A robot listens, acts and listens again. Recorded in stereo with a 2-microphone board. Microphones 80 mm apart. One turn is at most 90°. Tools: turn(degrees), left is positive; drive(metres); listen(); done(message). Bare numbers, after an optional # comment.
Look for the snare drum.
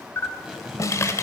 # The snare drum: about 45° left or 135° left.
turn(45)
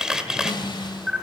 # So it is at 85° left.
turn(85)
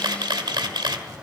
listen()
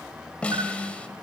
# The snare drum is now 15° left.
turn(15)
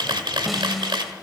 done("Found it: a snare drum, straight ahead.")